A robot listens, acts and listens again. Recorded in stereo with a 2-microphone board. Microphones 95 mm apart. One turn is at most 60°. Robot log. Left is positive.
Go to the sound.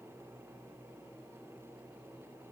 cmd idle
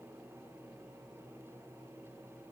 cmd idle
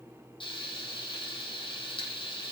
note: The frying: about 65° left or 115° left.
cmd yaw +60
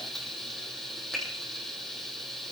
cmd fwd 1.0
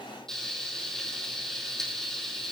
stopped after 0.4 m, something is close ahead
end: Blocked. The frying is further on, straight ahead.